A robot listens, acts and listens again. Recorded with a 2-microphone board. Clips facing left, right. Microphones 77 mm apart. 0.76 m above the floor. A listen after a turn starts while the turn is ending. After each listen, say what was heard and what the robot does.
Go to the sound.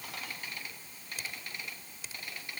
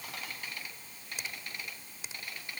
The finger snap: about 20° right or 160° right. Turn 20° right.
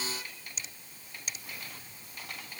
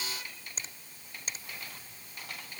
So it is at 135° right. Turn 135° right.
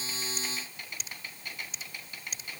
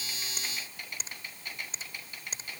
The finger snap is now 35° right. Turn 35° right.
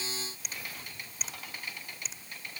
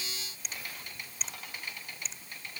Drive 1.0 m forward.
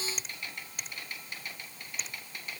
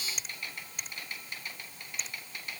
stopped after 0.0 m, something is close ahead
Something is in my way. I am facing the finger snap but have not reached it.